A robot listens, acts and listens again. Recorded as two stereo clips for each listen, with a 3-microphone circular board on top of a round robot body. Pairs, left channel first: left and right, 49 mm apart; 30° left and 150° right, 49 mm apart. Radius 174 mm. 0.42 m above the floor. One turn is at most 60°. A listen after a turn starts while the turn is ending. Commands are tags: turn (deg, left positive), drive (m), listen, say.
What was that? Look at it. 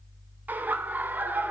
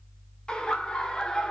<turn deg="-40"/>
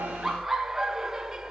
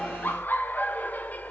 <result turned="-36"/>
<turn deg="-15"/>
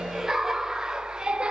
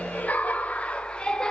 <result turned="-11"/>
<turn deg="-35"/>
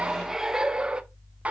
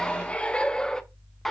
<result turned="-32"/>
<turn deg="-50"/>
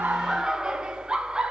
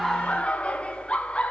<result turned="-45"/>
<turn deg="-25"/>
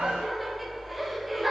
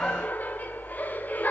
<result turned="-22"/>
<say>Facing the laughter, 1 to 2 m away.</say>